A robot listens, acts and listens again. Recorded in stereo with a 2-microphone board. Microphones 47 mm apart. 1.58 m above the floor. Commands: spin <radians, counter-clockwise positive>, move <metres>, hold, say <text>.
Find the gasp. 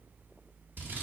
hold
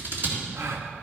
spin -1.22
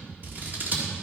hold
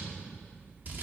say I heard a gasp, but can't make it out now. It was about straight ahead or 40° right.